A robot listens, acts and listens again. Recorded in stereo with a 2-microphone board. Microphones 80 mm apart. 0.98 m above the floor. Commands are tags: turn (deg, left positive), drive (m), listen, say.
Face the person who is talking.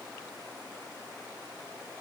<listen/>
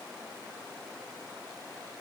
<listen/>
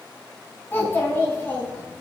<turn deg="30"/>
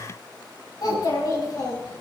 <turn deg="120"/>
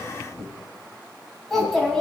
<say>Found it: a child speaking, straight ahead.</say>